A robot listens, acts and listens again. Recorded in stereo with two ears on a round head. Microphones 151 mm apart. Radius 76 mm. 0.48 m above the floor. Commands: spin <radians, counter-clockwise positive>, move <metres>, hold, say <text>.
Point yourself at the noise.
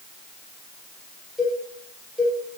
spin -0.52
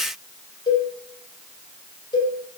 spin 0.44
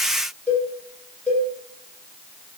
spin 0.17
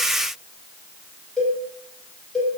say Found it: a cowbell, straight ahead, over 4 m away.